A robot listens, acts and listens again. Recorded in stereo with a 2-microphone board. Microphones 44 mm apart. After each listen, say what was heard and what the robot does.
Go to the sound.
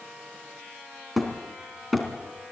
Turn 30° left.
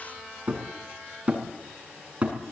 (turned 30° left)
So it is at 30° right. Turn 30° right.
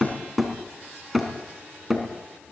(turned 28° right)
Drive 1.0 m forward.
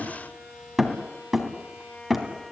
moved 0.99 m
Drive 1.0 m forward.
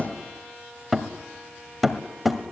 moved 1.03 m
Drive 1.0 m forward.
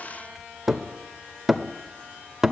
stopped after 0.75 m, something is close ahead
The hammering is now 10° right. Turn 10° right.
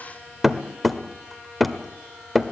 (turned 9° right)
Arrived at the hammering, straight ahead.